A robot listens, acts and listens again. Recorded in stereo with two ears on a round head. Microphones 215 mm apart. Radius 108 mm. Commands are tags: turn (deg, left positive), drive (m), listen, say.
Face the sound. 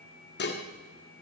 <turn deg="45"/>
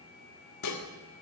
<turn deg="90"/>
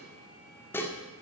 <turn deg="10"/>
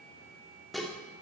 <say>Found it: dishes clattering, straight ahead, 1 to 2 m away.</say>